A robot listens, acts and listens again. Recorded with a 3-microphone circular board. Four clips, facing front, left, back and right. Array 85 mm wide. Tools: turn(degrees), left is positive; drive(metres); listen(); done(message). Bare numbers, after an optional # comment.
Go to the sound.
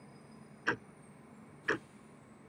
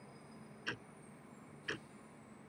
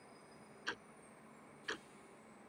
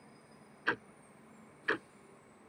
# The ticking: 50° right.
turn(-50)
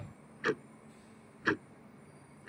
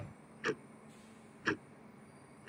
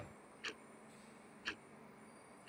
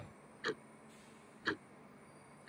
drive(1.0)
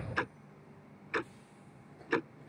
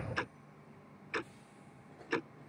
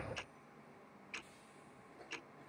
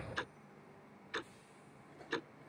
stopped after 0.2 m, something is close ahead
# The ticking is now 10° left.
turn(10)
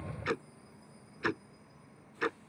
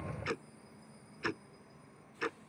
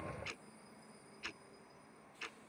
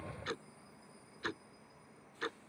done("Blocked. The ticking is further on, straight ahead.")